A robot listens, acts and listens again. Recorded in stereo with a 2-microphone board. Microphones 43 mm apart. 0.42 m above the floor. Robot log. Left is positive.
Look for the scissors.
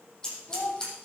note: The scissors: about 20° left or 160° left.
cmd yaw +20
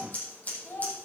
note: So it is at 140° left.
cmd yaw +140
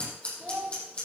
note: The scissors is now 30° left.
cmd yaw +30
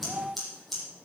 end: Facing the scissors, over 4 m away.